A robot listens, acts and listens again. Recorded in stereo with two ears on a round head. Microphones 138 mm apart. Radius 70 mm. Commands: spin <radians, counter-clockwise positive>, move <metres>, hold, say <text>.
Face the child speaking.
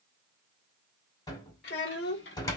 spin 1.22
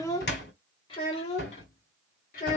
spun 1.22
spin 0.96
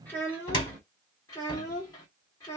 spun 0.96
spin 0.44
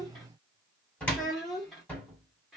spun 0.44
say Facing the child speaking, 1 to 2 m away.